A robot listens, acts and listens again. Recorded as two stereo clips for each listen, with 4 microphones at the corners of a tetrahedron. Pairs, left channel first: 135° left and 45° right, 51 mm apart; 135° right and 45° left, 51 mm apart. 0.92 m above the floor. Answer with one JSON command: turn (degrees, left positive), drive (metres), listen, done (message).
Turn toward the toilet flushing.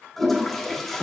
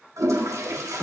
{"turn": 50}
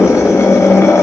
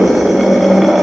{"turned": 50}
{"listen": true}
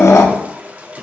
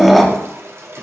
{"turn": 15}
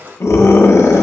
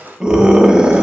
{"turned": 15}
{"done": "Found it: a toilet flushing, straight ahead, under 1 m away."}